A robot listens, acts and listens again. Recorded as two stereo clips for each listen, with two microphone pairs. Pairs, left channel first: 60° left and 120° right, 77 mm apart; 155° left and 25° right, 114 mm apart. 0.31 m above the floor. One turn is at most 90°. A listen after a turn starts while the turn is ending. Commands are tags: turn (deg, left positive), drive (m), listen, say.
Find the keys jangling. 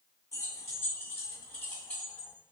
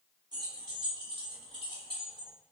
<turn deg="-20"/>
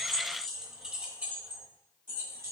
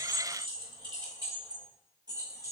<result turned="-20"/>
<turn deg="-80"/>
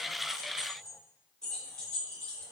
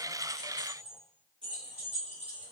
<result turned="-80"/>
<turn deg="-20"/>
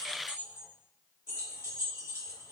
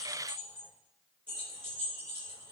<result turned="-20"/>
<say>Found it: keys jangling, straight ahead, 2 to 4 m away.</say>